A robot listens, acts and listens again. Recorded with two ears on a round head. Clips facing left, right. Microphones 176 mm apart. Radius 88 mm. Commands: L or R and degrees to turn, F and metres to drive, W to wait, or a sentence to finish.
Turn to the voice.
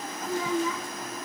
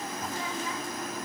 L70
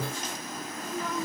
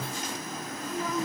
Found it: a child speaking, straight ahead.